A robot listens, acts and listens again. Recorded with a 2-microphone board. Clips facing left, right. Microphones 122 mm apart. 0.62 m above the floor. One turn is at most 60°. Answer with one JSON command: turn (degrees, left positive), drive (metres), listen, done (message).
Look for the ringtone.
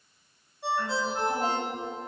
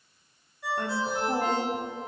{"turn": 25}
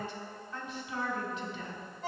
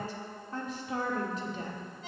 {"turn": 60}
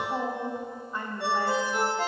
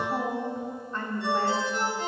{"turn": 60}
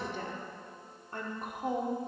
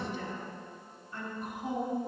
{"turn": 10}
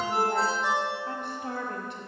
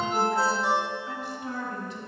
{"done": "Facing the ringtone, 1 to 2 m away."}